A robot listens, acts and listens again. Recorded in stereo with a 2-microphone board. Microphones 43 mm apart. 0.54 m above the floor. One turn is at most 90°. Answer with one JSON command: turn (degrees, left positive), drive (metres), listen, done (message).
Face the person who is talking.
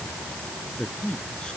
{"turn": 20}
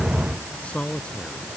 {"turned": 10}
{"turn": 25}
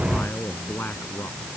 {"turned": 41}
{"turn": 90}
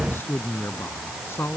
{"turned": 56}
{"turn": 75}
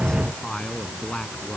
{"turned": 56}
{"turn": 20}
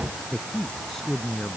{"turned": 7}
{"turn": 10}
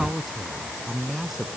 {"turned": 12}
{"done": "Found it: a man speaking, straight ahead."}